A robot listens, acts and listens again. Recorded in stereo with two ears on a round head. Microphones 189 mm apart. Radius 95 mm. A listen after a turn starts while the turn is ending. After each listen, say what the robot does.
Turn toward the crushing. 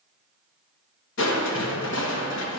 Turn 60° left.
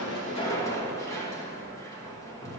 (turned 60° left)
Turn 15° left.
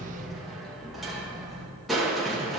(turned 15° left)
Facing the crushing.